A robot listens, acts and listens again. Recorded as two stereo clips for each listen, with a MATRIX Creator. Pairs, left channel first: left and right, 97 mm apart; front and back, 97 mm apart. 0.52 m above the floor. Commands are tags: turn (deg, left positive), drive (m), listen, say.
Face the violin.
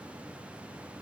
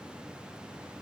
<listen/>
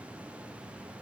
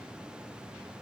<listen/>
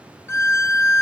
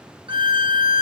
<turn deg="150"/>
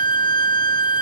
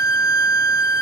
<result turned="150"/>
<turn deg="50"/>
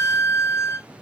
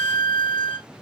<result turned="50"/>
<turn deg="30"/>
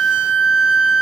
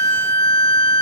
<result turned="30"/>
<turn deg="-10"/>
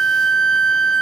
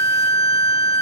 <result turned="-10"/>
<say>Found it: a violin, straight ahead, under 1 m away.</say>